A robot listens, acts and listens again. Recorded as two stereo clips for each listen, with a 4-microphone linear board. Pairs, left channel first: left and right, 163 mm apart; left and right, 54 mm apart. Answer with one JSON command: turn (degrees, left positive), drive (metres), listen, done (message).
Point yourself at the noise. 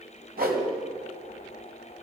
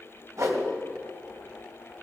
{"turn": -60}
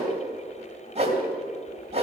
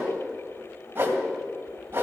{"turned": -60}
{"turn": -40}
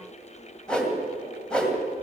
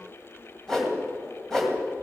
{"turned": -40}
{"done": "Found it: a whoosh, straight ahead, 2 to 4 m away."}